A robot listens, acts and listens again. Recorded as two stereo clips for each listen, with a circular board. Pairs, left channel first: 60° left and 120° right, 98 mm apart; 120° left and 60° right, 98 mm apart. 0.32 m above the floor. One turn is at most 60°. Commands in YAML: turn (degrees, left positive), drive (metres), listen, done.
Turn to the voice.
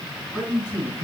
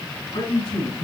turn: 60
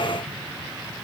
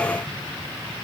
turn: 60
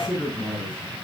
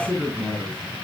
turn: 10
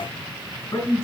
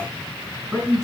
done: "Facing the man speaking."